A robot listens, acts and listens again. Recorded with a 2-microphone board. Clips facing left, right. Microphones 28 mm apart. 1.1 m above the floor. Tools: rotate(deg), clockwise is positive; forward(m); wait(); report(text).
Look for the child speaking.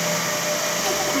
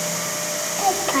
rotate(50)
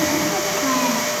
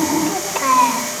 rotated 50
rotate(75)
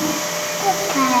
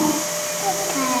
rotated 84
rotate(-10)
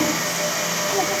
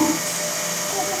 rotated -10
report("Facing the child speaking, 2 to 4 m away.")